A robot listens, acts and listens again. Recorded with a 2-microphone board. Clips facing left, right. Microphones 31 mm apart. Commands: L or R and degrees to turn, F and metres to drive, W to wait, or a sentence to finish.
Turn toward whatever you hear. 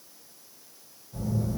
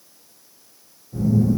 R15
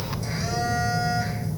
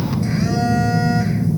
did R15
R150
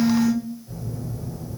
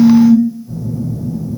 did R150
L25
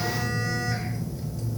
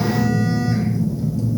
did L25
L10
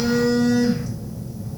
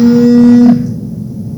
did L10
Facing the phone buzzing.